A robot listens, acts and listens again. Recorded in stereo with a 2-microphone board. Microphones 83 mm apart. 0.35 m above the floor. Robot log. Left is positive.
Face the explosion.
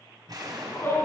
note: The explosion: about 55° right or 125° right.
cmd yaw -55
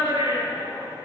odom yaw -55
cmd idle
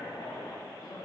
end: I heard an explosion, but can't make it out now. It was about straight ahead or 70° right.